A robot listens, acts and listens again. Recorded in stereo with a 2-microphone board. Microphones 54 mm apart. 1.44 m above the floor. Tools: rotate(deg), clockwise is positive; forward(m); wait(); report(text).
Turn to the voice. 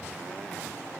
wait()
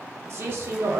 rotate(45)
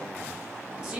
rotate(10)
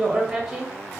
report("Facing the man speaking, under 1 m away.")